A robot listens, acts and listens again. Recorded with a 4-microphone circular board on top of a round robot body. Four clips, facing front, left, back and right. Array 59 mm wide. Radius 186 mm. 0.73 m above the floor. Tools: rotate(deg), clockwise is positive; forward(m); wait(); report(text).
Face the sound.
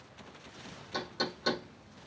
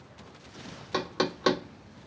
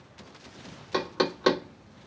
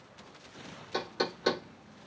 rotate(-145)
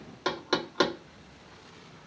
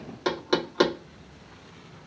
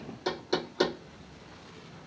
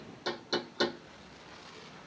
rotate(-50)
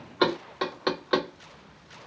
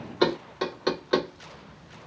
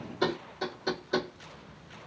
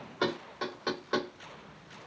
rotate(-15)
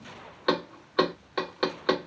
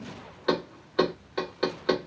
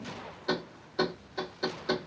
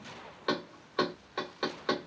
report("Found it: knocking, straight ahead, 1 to 2 m away.")